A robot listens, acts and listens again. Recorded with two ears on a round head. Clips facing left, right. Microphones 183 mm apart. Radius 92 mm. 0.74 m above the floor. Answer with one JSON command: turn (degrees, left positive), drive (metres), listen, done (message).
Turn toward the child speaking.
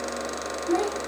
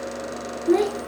{"turn": -60}
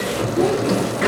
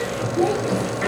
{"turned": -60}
{"listen": true}
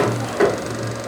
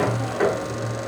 {"listen": true}
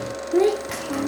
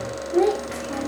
{"turn": 40}
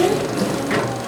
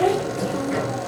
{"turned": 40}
{"turn": 25}
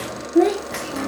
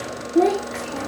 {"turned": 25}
{"turn": 20}
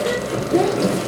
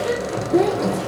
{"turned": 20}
{"done": "Found it: a child speaking, straight ahead."}